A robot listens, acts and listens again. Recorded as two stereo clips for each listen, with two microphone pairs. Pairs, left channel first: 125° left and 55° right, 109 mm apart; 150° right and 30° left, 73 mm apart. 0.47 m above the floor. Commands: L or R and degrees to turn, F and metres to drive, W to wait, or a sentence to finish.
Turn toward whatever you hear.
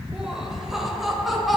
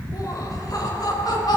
R145
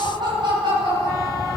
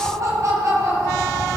R15
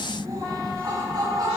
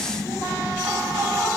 Facing the laughter.